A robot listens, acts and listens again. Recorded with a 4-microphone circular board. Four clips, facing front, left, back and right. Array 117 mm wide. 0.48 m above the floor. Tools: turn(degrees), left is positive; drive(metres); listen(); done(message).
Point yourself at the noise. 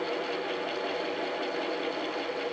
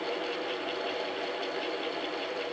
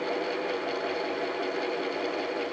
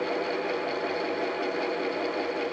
listen()
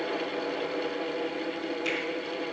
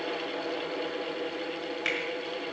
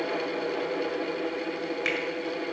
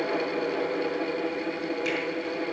turn(degrees=165)
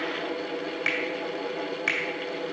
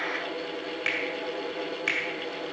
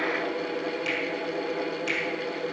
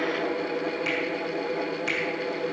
turn(degrees=25)
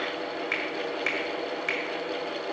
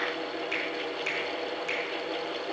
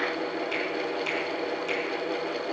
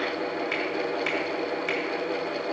turn(degrees=-10)
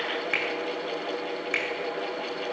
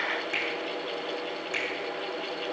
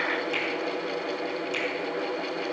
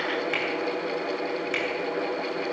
done("Facing the finger snap.")